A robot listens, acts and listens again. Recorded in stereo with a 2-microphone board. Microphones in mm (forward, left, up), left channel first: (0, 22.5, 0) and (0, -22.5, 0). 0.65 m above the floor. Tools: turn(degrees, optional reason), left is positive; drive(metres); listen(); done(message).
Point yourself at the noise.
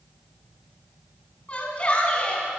turn(degrees=30, reason="The shout: about 30° left or 150° left.")
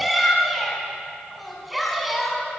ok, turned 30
done("Facing the shout.")